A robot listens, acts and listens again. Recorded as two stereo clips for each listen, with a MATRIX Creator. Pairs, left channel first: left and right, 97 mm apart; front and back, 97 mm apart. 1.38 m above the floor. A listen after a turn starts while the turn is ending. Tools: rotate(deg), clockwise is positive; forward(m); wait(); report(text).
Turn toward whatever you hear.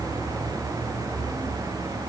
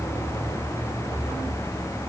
wait()
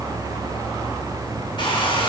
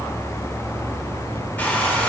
rotate(-70)
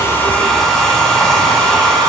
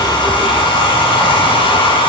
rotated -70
report("Found it: a hair dryer, straight ahead, 2 to 4 m away.")